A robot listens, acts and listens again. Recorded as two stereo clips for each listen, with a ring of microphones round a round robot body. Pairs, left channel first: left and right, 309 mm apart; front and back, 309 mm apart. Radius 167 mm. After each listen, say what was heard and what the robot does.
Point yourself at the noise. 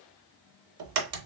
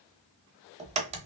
The crack: 110° right. Turn 110° right.
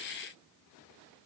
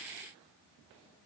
Facing where the crack came from. I can't hear it now.